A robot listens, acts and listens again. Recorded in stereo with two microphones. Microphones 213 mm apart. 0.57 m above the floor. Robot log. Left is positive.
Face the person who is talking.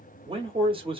note: The man speaking: about 25° right or 155° right.
cmd yaw -25
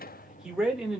end: Found it: a man speaking, straight ahead, 1 to 2 m away.